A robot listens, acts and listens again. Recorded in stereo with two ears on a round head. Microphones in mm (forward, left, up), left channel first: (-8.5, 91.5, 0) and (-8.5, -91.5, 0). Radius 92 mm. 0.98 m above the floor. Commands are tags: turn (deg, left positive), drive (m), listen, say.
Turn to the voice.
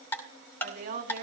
<turn deg="-40"/>
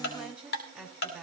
<say>Facing the woman speaking.</say>